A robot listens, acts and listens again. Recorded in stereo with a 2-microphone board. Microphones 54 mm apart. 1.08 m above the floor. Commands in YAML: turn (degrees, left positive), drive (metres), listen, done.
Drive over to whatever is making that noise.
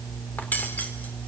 turn: 35
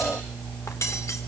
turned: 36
turn: 110
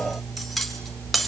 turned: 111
drive: 1.0
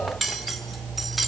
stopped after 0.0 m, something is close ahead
done: "Blocked. The cutlery clinking is further on, straight ahead."